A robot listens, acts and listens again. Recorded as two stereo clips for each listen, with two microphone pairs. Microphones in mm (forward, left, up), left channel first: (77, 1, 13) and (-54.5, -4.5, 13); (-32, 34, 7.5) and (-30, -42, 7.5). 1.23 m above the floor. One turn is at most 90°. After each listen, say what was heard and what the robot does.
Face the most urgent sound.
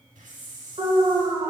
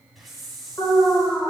The alarm: 135° left. Turn 90° left.
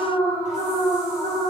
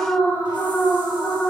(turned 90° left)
The alarm is now 55° left. Turn 55° left.
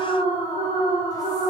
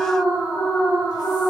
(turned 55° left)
The alarm is now 20° left. Turn 20° left.
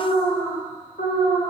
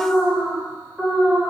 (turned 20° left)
Facing the alarm, 2 to 4 m away.